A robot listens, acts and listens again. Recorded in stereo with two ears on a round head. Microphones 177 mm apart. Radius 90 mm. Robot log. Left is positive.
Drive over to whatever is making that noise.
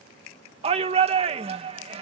note: The shout: about 30° right or 150° right.
cmd yaw -30
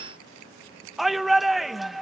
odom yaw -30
cmd fwd 1.0
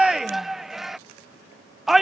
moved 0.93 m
cmd fwd 1.0
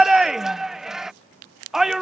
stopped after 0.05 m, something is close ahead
end: I am next to the shout.